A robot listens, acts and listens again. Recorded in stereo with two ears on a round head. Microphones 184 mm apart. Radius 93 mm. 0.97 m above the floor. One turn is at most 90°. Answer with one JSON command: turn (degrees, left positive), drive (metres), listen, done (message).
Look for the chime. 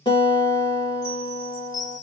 {"turn": 55}
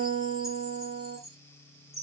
{"done": "Facing the chime, 1 to 2 m away."}